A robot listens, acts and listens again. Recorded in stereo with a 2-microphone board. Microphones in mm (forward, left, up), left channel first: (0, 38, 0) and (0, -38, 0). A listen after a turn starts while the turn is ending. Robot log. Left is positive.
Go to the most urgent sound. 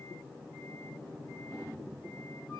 cmd idle
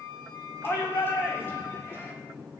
note: The shout: about 30° left or 150° left.
cmd yaw +30
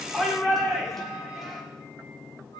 cmd fwd 1.0
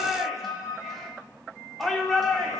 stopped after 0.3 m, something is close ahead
end: Something is in my way. I am facing the shout but have not reached it.